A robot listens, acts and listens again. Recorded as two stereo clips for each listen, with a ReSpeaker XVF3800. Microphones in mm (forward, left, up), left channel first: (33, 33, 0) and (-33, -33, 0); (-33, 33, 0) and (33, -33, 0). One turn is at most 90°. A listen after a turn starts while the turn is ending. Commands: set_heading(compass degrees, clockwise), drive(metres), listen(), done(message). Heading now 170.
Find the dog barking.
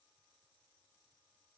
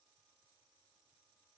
listen()
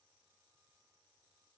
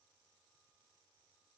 listen()
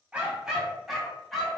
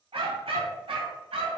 set_heading(210)
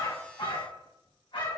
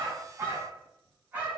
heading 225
set_heading(200)
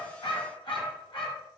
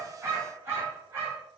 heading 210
set_heading(195)
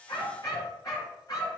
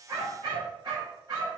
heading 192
done("Facing the dog barking, 2 to 4 m away.")